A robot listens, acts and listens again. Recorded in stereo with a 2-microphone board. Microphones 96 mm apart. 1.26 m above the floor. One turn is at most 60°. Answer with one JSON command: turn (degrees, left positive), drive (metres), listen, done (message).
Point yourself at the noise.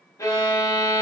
{"turn": 35}
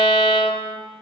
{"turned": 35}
{"turn": 60}
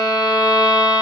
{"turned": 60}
{"turn": 50}
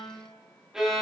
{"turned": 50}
{"done": "Found it: a violin, straight ahead, under 1 m away."}